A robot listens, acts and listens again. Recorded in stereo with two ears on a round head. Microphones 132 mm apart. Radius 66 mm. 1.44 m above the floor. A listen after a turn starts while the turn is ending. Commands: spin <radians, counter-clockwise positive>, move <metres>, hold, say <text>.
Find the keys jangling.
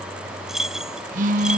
spin -0.52
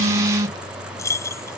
spin 0.35
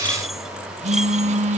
hold
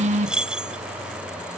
say Found it: keys jangling, straight ahead.